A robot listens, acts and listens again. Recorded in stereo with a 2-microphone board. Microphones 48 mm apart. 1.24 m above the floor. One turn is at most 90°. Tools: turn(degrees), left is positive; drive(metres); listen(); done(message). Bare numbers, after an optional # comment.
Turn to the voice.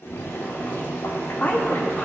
# The woman speaking: about 35° left or 145° left.
turn(35)
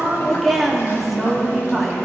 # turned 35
done("Found it: a woman speaking, straight ahead, 1 to 2 m away.")